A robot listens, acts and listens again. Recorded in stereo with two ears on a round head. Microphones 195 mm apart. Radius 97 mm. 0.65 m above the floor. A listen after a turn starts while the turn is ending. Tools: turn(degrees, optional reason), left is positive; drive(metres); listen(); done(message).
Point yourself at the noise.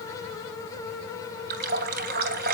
turn(degrees=-45, reason="The running tap: about 45° right or 135° right.")
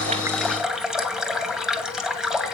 done("Facing the running tap, 2 to 4 m away.")